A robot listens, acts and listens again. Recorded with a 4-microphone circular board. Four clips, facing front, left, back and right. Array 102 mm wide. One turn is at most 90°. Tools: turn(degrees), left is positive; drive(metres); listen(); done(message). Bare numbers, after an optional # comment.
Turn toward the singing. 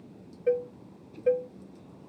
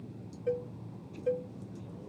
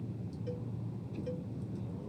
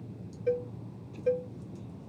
listen()
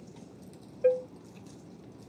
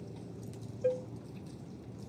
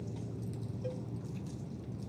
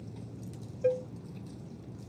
listen()
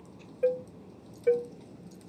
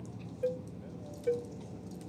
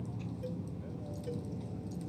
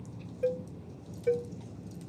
done("I can't make out singing to turn to.")